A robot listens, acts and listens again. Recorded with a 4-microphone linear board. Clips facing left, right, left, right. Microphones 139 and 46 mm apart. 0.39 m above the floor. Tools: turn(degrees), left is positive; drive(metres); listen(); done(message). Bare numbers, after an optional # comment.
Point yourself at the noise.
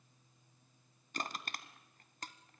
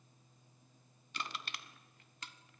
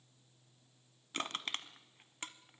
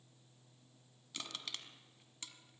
# The crushing: about 45° left or 135° left.
turn(45)
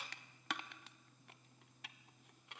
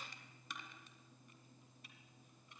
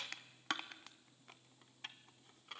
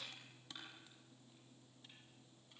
# So it is at 90° left.
turn(90)
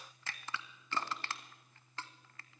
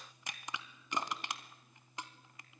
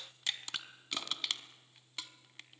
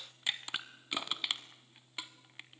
# The crushing is now 20° right.
turn(-20)
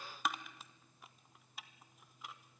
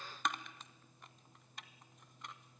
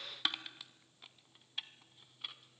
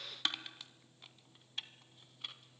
done("Found it: crushing, straight ahead.")